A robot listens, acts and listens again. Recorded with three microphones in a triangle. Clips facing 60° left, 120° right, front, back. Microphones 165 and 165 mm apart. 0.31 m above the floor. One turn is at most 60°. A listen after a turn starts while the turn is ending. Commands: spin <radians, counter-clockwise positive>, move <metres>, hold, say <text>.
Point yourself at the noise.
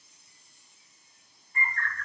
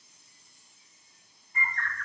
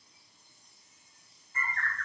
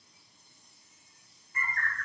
spin -0.96
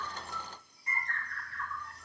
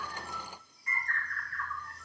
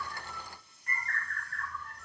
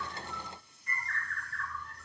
say Found it: a bird, straight ahead.